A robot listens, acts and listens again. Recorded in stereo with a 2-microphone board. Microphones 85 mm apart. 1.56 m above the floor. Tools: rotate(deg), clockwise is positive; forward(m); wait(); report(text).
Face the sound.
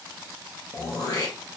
rotate(-45)
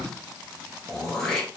rotate(-10)
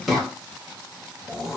report("Found it: throat clearing, straight ahead.")